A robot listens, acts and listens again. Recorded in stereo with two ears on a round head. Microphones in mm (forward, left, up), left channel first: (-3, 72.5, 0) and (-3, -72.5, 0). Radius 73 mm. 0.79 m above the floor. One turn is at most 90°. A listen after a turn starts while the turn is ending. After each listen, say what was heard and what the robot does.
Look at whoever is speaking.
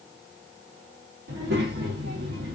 Turn 90° right.
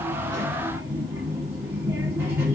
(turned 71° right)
So it is at 15° right. Turn 15° right.
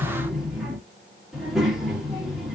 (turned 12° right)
Facing the child speaking.